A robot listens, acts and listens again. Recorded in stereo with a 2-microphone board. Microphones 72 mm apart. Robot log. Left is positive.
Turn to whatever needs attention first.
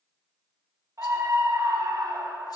note: The scream: about 45° right or 135° right.
cmd yaw -45
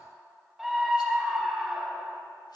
end: Found it: a scream, straight ahead, 1 to 2 m away.